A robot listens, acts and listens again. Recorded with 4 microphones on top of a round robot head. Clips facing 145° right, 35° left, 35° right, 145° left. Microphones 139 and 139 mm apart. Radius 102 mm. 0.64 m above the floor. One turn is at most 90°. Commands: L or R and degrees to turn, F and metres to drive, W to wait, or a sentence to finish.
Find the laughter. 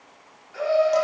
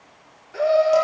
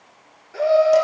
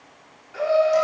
Facing the laughter, 2 to 4 m away.